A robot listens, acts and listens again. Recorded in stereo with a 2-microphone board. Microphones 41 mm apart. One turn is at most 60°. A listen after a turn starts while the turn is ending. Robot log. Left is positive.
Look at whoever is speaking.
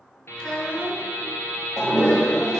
note: The child speaking: about 30° left or 150° left.
cmd yaw +30
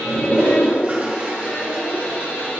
cmd idle
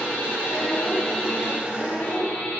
note: So it is at 95° left.
cmd yaw +60
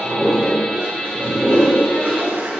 note: Nothing new. It was at 35° left.
cmd yaw +35
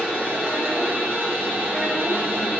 cmd idle
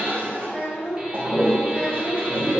note: The child speaking is now 25° left.
cmd yaw +25
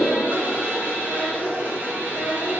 end: Facing the child speaking.